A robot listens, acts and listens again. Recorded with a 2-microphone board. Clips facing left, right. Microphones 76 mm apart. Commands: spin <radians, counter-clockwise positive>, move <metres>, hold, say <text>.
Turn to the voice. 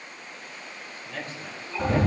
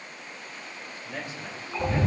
spin -0.26
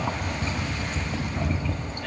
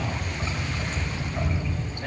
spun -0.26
hold
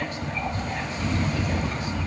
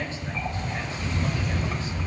hold
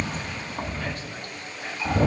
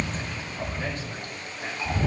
say I heard a man speaking, but can't make it out now. It was about straight ahead or 150° right.